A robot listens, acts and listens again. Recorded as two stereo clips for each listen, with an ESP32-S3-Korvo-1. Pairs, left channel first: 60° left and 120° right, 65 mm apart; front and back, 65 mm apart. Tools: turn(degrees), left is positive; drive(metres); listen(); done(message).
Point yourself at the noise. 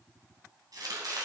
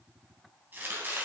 turn(degrees=-125)
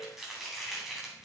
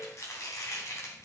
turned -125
turn(degrees=-35)
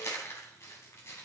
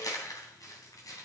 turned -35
turn(degrees=15)
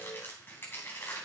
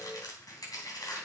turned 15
done("Found it: chopping, straight ahead, 2 to 4 m away.")